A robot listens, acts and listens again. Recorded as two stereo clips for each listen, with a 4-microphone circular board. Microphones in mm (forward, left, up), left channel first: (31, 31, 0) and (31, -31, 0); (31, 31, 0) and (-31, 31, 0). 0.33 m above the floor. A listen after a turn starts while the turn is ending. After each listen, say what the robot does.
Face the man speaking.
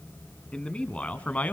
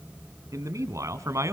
Turn 150° left.
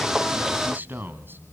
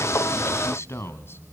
Turn 40° right.
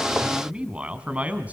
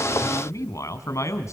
Turn 30° right.
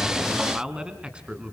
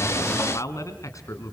Turn 20° right.
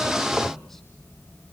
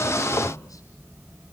Keep listening.
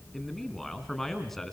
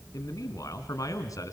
Found it: a man speaking, straight ahead.